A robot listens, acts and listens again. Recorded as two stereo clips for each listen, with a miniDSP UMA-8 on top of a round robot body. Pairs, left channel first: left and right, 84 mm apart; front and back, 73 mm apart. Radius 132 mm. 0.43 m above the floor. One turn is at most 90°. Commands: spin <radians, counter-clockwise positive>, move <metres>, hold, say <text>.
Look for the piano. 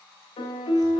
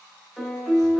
spin 1.57
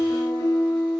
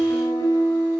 spin 0.70
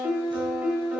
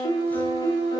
spin -0.26
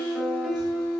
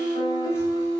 say Found it: a piano, straight ahead, over 4 m away.